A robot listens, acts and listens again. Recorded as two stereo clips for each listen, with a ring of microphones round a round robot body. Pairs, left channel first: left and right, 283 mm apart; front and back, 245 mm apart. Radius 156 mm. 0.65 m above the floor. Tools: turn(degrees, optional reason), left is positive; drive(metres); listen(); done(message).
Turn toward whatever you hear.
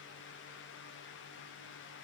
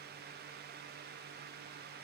listen()
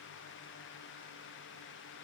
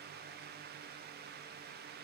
listen()
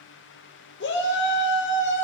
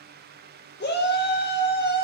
turn(degrees=45, reason="The shout: 45° left.")
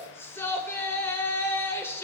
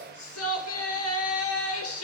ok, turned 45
turn(degrees=10, reason="The shout is now 10° left.")
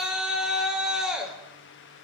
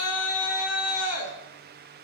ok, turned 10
done("Facing the shout.")